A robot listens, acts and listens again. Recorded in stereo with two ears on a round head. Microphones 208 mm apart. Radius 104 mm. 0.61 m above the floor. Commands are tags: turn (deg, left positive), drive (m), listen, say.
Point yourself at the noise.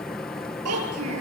<turn deg="-70"/>
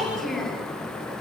<say>Facing the child speaking, over 4 m away.</say>